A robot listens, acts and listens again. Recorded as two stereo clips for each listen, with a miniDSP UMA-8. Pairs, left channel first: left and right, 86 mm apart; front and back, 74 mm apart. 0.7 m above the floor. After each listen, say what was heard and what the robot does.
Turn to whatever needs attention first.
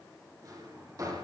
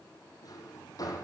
Keep listening.
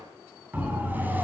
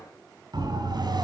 The siren: 160° right. Turn 160° right.
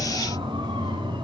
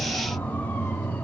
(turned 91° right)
The siren is now 70° right. Turn 70° right.
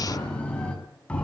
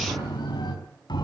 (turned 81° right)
The siren is now 15° left. Turn 15° left.
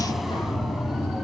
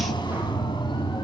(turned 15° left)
Found it: a siren, straight ahead, over 4 m away.